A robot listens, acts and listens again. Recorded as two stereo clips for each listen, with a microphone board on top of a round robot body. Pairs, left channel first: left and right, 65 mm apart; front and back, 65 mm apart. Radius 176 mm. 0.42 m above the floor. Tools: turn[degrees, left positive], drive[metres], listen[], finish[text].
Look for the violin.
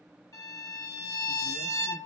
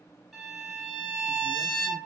Thought: The violin: 90° left.
Action: turn[90]
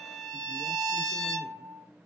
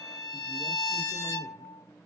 Action: finish[Found it: a violin, straight ahead, 1 to 2 m away.]